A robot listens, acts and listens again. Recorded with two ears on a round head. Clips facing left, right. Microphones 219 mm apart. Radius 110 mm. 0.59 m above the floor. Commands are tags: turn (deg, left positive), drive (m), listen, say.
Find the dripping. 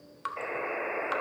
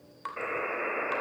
<turn deg="30"/>
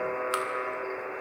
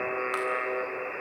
<listen/>
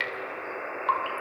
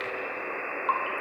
<turn deg="135"/>
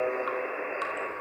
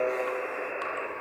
<listen/>
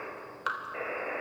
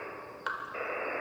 <turn deg="10"/>
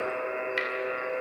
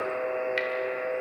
<say>Found it: dripping, straight ahead, 2 to 4 m away.</say>